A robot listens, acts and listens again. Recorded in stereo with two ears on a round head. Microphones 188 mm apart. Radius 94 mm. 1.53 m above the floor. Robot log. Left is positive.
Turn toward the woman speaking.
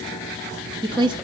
note: The woman speaking: about 20° right or 160° right.
cmd yaw -20
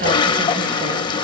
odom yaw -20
cmd idle
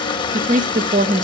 note: The woman speaking: about 40° right or 140° right.
cmd yaw -40
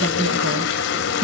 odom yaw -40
note: So it is at 105° right.
cmd yaw -105
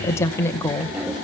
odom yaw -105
note: The woman speaking is now 10° left.
cmd yaw +10
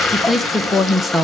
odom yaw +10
end: Facing the woman speaking.